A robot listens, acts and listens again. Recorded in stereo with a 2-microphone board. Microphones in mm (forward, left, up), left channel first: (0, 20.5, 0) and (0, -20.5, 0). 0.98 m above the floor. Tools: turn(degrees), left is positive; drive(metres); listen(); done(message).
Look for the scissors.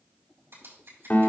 turn(degrees=-90)
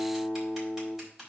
turn(degrees=-10)
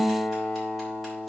listen()
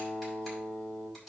done("Found it: scissors, straight ahead, over 4 m away.")